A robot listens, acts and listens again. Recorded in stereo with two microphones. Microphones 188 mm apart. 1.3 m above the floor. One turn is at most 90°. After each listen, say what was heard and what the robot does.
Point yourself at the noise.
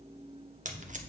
The tape being pulled: about 45° right or 135° right. Turn 45° right.
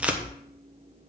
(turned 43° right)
Facing the tape being pulled, under 1 m away.